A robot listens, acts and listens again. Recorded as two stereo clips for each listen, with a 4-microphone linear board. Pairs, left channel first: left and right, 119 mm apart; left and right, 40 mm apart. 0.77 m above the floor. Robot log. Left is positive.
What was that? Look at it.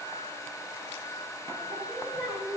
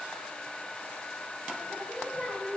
cmd yaw -30
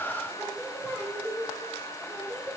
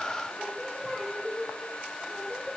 end: Found it: singing, straight ahead, 2 to 4 m away.